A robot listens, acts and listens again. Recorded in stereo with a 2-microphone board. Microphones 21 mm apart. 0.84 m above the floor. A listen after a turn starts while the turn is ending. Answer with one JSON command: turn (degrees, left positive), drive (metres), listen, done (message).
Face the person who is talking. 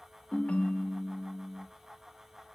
{"listen": true}
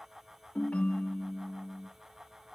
{"listen": true}
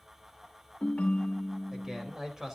{"turn": -20}
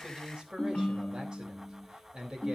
{"turn": -140}
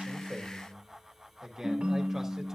{"turn": -25}
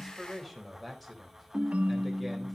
{"done": "Found it: a man speaking, straight ahead, 2 to 4 m away."}